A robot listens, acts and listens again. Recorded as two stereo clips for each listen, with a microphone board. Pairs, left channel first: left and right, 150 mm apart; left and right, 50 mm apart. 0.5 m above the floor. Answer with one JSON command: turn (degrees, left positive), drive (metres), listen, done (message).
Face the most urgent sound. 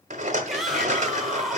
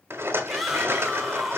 {"turn": 30}
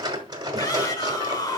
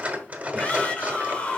{"turn": 150}
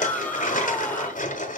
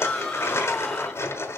{"turn": 15}
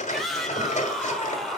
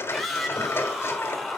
{"done": "Facing the shout."}